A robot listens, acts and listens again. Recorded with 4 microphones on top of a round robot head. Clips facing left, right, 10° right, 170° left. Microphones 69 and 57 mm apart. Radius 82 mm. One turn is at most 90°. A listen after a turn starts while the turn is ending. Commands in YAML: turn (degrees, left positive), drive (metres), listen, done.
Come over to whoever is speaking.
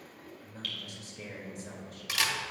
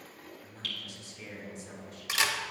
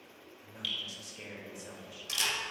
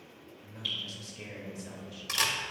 turn: 60
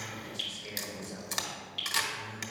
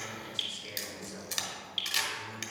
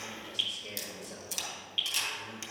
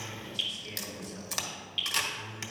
drive: 1.0
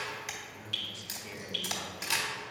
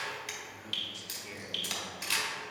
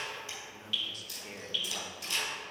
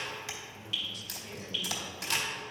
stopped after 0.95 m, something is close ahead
done: "I am next to the man speaking."